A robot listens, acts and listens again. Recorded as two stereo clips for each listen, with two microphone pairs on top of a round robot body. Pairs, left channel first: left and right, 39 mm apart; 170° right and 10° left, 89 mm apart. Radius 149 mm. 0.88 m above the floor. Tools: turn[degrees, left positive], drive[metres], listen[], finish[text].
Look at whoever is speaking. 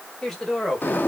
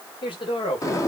Thought: The woman speaking: 170° left.
Action: turn[170]
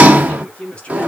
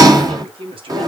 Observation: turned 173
Thought: The woman speaking is now 25° left.
Action: turn[25]
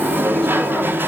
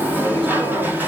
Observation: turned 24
Action: listen[]
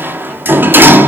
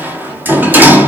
Action: listen[]
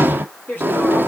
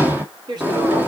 Thought: The woman speaking is now 50° left.
Action: turn[50]
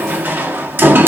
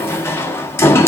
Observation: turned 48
Action: listen[]
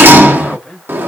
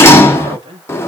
Action: finish[Found it: a woman speaking, straight ahead, 2 to 4 m away.]